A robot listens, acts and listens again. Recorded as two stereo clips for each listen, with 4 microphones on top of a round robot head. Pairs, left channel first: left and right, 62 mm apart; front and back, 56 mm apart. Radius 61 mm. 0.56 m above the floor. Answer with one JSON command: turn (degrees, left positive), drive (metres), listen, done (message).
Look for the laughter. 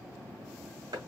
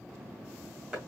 {"listen": true}
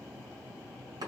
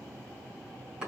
{"listen": true}
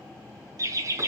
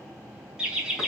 {"turn": -100}
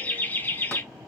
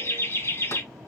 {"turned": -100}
{"turn": 40}
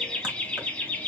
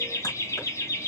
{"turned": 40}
{"turn": 25}
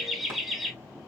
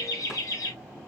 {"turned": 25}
{"done": "Found it: laughter, straight ahead, 2 to 4 m away."}